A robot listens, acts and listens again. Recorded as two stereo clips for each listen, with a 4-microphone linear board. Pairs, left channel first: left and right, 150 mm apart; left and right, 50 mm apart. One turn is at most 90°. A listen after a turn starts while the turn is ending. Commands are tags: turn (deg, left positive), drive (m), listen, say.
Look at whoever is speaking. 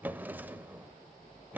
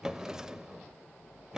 <listen/>
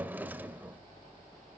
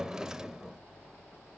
<listen/>
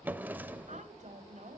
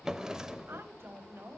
<turn deg="-50"/>
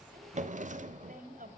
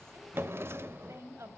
<turn deg="-75"/>
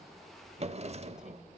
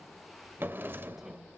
<listen/>
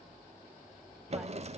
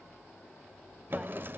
<listen/>
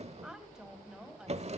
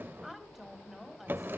<say>Facing the woman speaking, 2 to 4 m away.</say>